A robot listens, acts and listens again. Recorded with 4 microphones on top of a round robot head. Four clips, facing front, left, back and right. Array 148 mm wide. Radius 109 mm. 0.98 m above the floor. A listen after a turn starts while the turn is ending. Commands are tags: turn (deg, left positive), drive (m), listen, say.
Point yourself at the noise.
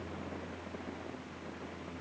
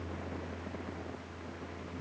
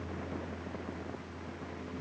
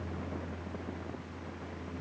<listen/>
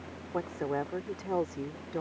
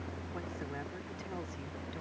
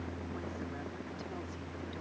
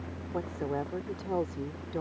<turn deg="-40"/>
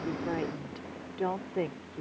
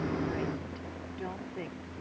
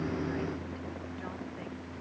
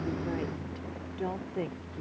<turn deg="-20"/>
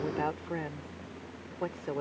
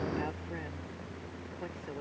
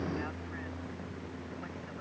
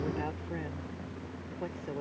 <turn deg="-10"/>
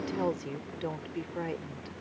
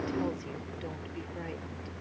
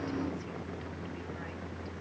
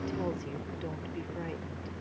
<listen/>
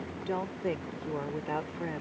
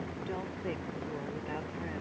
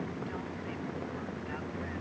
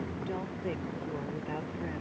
<say>Found it: a woman speaking, straight ahead.</say>